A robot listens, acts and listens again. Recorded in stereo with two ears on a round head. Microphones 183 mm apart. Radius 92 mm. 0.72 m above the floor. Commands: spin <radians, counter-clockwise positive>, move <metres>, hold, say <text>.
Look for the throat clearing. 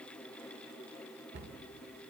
hold
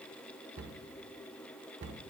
hold
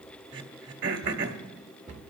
spin -1.13
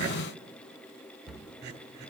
spin -0.96
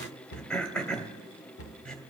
say Found it: throat clearing, straight ahead.